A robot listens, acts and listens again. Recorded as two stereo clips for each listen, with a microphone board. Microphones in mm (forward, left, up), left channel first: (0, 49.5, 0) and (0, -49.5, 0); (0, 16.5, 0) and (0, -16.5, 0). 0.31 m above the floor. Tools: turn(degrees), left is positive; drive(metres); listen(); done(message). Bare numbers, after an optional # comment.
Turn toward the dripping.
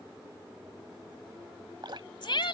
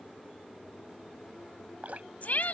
# The dripping: about 55° right or 125° right.
turn(-55)
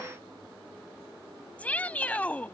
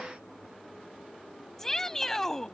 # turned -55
listen()
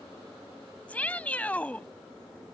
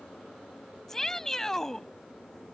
listen()
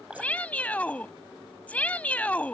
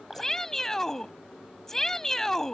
# So it is at 10° right.
turn(-10)
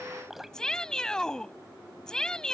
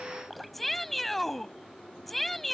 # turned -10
done("Found it: dripping, straight ahead.")